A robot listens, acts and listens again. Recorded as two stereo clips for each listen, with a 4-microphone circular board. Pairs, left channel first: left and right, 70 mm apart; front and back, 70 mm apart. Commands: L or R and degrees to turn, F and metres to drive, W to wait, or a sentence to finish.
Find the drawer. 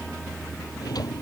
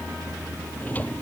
L65
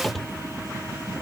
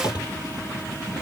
Facing the drawer.